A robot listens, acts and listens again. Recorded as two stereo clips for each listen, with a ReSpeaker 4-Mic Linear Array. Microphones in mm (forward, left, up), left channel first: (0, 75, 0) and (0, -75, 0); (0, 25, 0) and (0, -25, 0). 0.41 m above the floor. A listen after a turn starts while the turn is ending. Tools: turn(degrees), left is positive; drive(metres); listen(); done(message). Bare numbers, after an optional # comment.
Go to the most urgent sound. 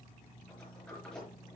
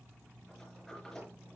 listen()
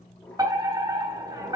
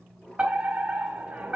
# The fire alarm: about 25° right or 155° right.
turn(-25)
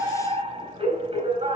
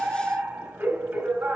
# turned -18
# So it is at 140° right.
turn(-140)
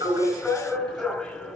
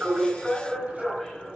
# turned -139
drive(1.0)
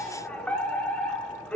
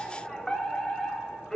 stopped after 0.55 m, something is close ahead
# The fire alarm is now 10° left.
turn(10)
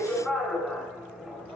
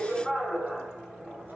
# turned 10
done("Blocked. The fire alarm is further on, straight ahead.")